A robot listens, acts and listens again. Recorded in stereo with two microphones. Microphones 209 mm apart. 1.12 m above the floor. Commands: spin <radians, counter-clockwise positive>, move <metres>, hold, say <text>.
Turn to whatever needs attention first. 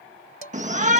spin -0.61
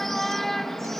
say Facing the shout.